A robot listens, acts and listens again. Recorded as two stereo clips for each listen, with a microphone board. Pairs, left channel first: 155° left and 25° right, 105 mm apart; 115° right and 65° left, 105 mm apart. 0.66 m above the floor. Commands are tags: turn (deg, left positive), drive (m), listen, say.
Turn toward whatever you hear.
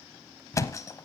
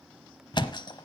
<turn deg="-145"/>
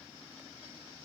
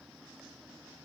<say>I heard a thud from this way, but can't make it out now.</say>